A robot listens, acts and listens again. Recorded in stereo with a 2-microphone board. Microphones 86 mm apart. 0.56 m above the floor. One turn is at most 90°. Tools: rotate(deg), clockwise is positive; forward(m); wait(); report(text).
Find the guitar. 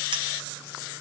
wait()
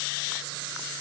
wait()
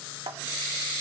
report("I can't make out a guitar to turn to.")